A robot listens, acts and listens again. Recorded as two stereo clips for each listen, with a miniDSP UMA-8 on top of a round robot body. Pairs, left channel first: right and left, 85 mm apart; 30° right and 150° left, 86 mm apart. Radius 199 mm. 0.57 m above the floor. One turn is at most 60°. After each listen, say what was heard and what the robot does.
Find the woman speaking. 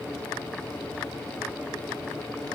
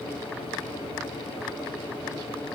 Keep listening.
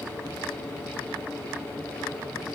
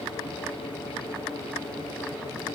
Keep listening.
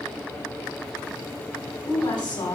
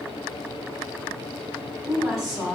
The woman speaking: 120° right. Turn 60° right.
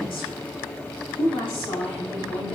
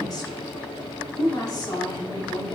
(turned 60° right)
The woman speaking is now 70° right. Turn 60° right.
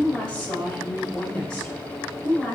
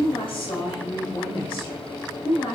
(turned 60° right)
The woman speaking is now 10° right. Turn 10° right.
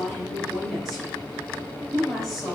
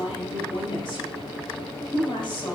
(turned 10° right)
Facing the woman speaking.